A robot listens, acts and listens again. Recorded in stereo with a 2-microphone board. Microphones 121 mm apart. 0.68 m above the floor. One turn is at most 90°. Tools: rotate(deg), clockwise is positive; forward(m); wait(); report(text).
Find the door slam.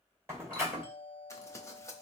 rotate(20)
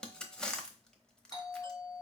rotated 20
wait()
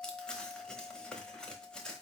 report("I heard a door slam, but can't make it out now. It was about straight ahead or 140° right.")